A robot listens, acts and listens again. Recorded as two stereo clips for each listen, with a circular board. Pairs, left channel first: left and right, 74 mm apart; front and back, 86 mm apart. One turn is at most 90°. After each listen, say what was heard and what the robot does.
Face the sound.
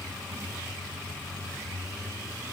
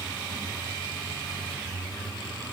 Keep listening.
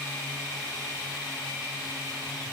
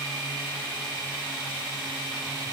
Keep listening.
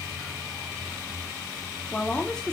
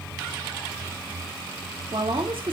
The woman speaking: 170° left. Turn 90° left.
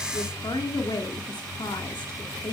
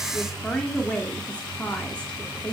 The woman speaking is now 75° left. Turn 75° left.
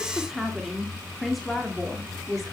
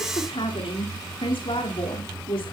Facing the woman speaking.